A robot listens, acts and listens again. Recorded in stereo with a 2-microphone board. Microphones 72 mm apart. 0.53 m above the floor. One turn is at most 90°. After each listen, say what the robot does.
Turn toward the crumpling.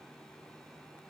Keep listening.
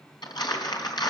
Turn 75° left.
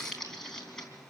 Found it: crumpling, straight ahead, 2 to 4 m away.